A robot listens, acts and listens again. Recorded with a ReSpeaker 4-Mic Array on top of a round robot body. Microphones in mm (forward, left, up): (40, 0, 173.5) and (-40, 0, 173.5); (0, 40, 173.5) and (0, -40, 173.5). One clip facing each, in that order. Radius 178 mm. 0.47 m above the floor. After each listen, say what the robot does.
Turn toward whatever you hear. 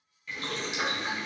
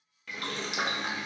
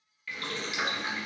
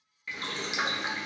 Turn 160° right.
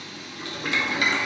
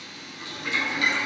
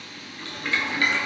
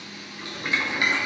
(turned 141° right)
Turn 20° right.
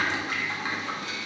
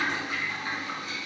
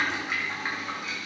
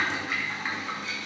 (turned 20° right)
Facing the boiling.